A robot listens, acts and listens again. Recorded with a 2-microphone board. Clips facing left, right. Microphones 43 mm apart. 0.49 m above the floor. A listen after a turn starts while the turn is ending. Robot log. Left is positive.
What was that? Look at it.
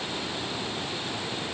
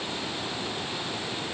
cmd idle
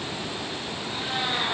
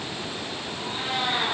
note: The cat meowing: about 35° right or 145° right.
cmd yaw -35
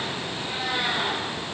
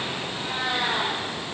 note: So it is at 110° right.
cmd yaw -110
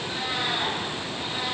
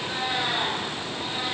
note: The cat meowing is now 20° right.
cmd yaw -20
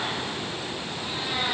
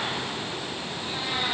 note: The cat meowing is now 10° right.
cmd yaw -10
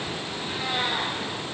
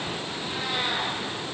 end: Found it: a cat meowing, straight ahead, over 4 m away.